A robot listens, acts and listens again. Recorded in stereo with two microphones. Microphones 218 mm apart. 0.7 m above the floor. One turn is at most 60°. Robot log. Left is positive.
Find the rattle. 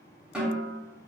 cmd idle
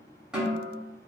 cmd idle
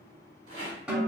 cmd yaw -60
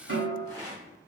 note: So it is at 20° right.
cmd yaw -20
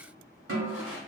end: Found it: a rattle, straight ahead, 1 to 2 m away.